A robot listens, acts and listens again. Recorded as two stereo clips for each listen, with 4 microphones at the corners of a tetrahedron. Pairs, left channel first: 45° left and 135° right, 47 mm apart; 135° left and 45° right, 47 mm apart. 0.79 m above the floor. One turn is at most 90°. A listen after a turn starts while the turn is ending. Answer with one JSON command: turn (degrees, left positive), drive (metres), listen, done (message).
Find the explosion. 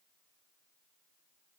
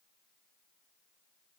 {"listen": true}
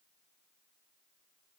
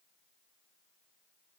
{"listen": true}
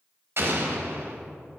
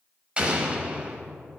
{"turn": -90}
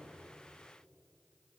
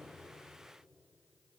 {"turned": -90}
{"turn": -20}
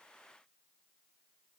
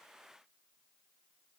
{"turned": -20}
{"done": "Facing where the explosion came from. I can't hear it now."}